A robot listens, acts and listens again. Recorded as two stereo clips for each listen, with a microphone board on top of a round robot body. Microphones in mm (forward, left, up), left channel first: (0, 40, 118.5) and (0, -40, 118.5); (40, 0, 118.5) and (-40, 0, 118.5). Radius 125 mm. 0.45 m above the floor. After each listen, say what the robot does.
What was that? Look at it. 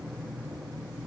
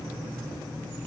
Keep listening.
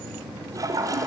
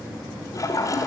Turn 45° right.
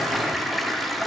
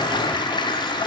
Found it: a toilet flushing, straight ahead.